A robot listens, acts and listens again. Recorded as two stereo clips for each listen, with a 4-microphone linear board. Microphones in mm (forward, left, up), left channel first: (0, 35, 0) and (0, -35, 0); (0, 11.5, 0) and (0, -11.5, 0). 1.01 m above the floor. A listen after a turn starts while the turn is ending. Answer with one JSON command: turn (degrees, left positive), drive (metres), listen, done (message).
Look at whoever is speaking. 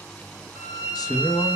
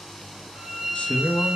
{"turn": 65}
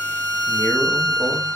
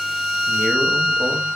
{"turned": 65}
{"listen": true}
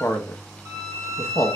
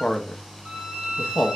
{"turn": 45}
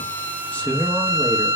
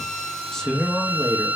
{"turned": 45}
{"turn": 25}
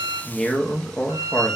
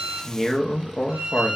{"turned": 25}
{"turn": 10}
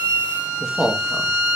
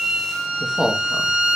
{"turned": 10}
{"done": "Found it: a man speaking, straight ahead, under 1 m away."}